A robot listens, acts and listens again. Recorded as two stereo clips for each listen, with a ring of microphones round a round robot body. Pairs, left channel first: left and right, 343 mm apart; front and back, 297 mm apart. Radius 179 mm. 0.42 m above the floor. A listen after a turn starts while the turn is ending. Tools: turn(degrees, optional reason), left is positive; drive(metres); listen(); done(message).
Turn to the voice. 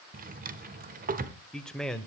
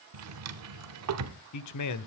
done("Found it: a man speaking, straight ahead, 1 to 2 m away.")